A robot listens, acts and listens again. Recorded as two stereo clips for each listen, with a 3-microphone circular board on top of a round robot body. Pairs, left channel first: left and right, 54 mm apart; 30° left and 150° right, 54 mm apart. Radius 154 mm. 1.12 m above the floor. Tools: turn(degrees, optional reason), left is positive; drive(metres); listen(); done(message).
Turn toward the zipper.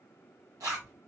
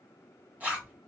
turn(degrees=-90, reason="The zipper: 90° right.")
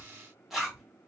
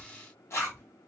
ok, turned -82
done("Found it: a zipper, straight ahead.")